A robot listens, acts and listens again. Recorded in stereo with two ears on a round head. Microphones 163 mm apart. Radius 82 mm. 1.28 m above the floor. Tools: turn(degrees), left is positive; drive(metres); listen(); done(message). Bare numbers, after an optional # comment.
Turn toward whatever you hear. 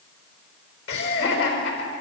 turn(90)
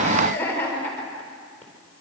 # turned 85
# So it is at 10° left.
turn(10)
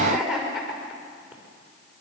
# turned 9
done("Facing the laughter.")